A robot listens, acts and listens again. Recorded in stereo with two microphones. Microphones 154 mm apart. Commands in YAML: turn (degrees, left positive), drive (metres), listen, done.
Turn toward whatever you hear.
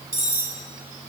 turn: -70
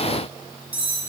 turn: -10
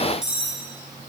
done: "Found it: cutlery clinking, straight ahead."